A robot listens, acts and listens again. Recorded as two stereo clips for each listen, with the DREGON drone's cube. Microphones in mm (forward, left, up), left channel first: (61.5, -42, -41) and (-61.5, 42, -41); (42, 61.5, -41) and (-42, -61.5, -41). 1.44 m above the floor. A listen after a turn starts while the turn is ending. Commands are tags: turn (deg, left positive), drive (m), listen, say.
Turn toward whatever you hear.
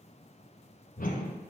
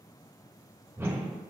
<turn deg="-50"/>
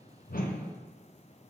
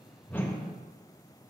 <turn deg="-15"/>
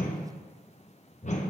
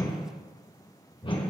<say>Found it: a whoosh, straight ahead.</say>